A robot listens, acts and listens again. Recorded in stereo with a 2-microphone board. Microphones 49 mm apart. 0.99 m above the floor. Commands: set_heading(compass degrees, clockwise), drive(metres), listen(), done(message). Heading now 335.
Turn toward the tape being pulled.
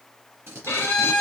set_heading(30)
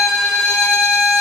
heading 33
listen()
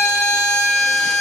listen()
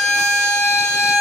done("I heard tape being pulled, but can't make it out now. It was about 5° left or 70° right.")